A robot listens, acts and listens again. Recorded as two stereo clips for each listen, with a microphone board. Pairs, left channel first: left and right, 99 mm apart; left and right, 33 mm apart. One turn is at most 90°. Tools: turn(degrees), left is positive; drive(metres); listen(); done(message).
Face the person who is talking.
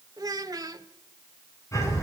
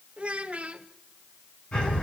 turn(degrees=-35)
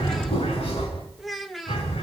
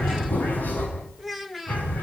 done("Found it: a child speaking, straight ahead.")